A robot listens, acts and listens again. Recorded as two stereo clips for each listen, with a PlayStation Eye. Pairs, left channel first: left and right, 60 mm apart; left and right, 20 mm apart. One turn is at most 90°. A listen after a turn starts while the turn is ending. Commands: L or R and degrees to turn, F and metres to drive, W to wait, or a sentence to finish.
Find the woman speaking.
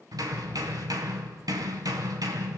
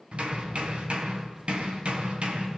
W
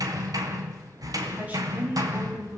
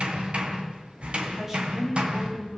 R25
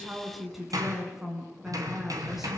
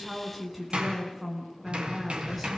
Found it: a woman speaking, straight ahead.